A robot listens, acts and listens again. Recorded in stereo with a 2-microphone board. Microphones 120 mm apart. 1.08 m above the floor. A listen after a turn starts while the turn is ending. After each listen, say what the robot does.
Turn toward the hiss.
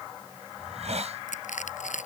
Turn 60° right.
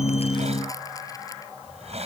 Turn 60° right.
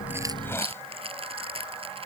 Keep listening.
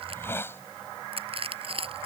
Turn 20° left.
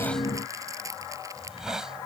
Facing the hiss.